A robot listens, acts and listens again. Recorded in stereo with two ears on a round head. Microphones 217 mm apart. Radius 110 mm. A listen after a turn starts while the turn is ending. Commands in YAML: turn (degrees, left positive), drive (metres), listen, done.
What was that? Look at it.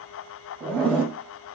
turn: 30
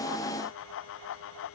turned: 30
listen: true
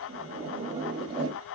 turn: -20
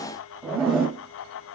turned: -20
done: "Found it: a zipper, straight ahead."